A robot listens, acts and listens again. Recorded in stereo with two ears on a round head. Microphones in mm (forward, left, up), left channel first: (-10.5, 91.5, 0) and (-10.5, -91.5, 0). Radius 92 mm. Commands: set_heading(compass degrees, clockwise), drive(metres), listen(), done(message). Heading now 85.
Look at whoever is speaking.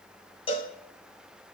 listen()
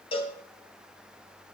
listen()
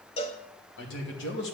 set_heading(30)
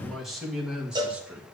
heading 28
set_heading(38)
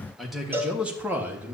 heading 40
set_heading(50)
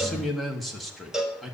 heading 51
done("Facing the man speaking, 1 to 2 m away.")